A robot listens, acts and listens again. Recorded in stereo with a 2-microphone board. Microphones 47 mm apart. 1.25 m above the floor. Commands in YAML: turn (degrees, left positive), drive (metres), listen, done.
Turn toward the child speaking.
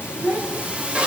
turn: -55
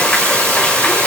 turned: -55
listen: true
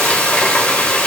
listen: true
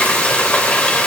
done: "I heard a child speaking, but can't make it out now. It was about straight ahead or 70° right."